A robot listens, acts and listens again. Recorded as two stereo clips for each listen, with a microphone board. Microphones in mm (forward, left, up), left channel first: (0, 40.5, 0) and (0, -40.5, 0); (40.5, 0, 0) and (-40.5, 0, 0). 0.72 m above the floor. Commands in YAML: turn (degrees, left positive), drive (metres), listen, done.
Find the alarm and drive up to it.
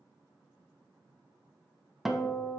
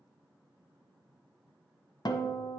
listen: true
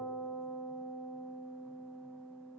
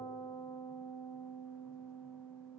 listen: true
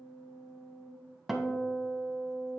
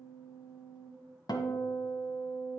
done: "I can't make out an alarm, only a guitar."